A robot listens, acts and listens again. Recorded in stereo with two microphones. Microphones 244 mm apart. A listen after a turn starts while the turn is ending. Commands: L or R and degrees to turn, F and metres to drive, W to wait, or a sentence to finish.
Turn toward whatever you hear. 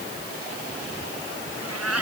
R90
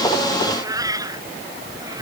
R15
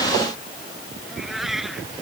Facing the cat meowing.